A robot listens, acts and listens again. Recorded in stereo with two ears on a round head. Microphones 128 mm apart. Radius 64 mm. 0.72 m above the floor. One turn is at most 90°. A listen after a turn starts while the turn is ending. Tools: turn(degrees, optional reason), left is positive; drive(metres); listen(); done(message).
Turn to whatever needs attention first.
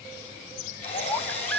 turn(degrees=30)
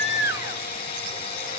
listen()
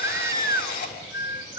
turn(degrees=-20, reason="So it is at 20° right.")
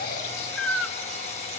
done("Found it: a baby crying, straight ahead.")